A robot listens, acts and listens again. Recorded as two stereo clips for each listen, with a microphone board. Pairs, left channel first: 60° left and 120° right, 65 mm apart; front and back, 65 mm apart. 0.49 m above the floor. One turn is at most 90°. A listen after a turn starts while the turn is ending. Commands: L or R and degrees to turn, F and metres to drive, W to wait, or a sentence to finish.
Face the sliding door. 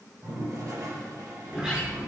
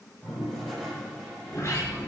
R45
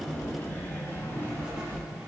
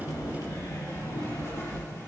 Found it: a sliding door, straight ahead, over 4 m away.